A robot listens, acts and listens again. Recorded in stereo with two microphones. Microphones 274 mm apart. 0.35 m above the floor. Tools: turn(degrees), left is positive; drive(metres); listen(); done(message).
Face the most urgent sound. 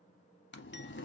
listen()
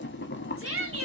turn(degrees=-50)
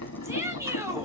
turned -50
turn(degrees=-10)
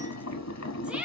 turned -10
done("Facing the shout, 1 to 2 m away.")